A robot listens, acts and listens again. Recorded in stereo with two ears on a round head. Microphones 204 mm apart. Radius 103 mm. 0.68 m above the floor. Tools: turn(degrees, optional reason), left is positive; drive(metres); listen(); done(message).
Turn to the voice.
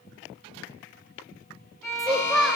turn(degrees=30)
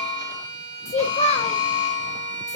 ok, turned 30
turn(degrees=150, reason="So it is at 150° left.")
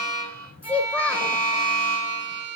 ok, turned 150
done("Facing the child speaking.")